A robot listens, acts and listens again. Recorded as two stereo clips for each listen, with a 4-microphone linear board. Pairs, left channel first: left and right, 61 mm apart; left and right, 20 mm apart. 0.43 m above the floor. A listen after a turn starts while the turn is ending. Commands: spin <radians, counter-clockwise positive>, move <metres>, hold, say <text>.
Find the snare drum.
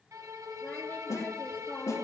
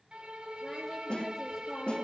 spin 1.13
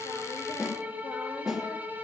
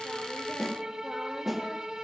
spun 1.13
say Found it: a snare drum, straight ahead.